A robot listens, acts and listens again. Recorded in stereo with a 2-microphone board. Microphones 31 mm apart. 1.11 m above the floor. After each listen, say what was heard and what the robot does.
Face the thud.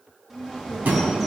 The thud: about 60° right or 120° right. Turn 60° right.
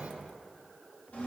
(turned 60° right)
Keep listening.
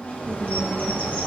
I heard a thud, but can't make it out now. It was about straight ahead or 60° right.